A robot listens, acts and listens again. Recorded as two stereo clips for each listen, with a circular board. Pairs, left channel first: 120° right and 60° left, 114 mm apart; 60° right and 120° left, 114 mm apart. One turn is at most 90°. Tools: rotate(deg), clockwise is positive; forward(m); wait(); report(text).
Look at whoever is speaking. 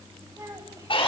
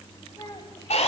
report("Found it: a child speaking, straight ahead, 2 to 4 m away.")